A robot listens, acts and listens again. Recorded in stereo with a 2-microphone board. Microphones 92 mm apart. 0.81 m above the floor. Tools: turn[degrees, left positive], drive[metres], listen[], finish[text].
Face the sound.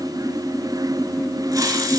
Thought: The hiss: about 35° right or 145° right.
Action: turn[-35]
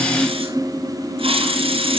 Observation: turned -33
Thought: So it is at 110° right.
Action: turn[-110]
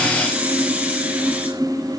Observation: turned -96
Thought: The hiss is now 15° right.
Action: turn[-15]
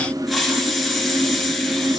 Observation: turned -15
Action: finish[Facing the hiss, 2 to 4 m away.]